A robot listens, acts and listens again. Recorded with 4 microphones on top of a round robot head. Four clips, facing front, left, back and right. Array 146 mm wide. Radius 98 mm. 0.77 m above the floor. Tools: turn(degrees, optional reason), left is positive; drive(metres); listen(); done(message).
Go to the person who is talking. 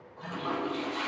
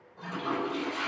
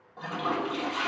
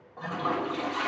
listen()
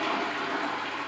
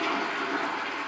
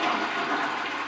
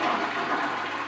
listen()
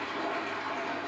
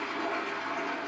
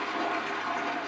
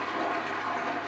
done("I can't make out anyone speaking to turn to.")